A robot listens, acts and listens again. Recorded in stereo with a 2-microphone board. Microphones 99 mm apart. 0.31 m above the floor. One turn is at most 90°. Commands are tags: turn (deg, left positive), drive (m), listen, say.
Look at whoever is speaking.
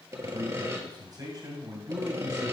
<turn deg="-40"/>
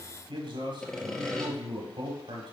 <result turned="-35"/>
<turn deg="-90"/>
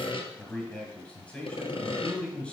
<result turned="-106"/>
<turn deg="15"/>
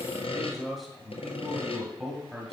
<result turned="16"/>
<say>Found it: a man speaking, straight ahead.</say>